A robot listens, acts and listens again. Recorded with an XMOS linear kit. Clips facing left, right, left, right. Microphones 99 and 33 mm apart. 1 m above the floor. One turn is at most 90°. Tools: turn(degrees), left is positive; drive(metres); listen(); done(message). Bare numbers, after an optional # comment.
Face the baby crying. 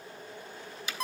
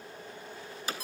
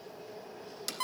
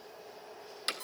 listen()
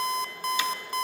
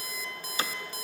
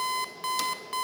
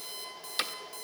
listen()
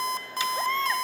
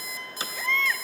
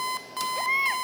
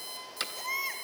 # The baby crying: about 35° left or 145° left.
turn(35)
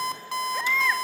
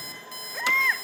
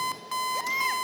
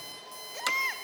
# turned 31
done("Facing the baby crying.")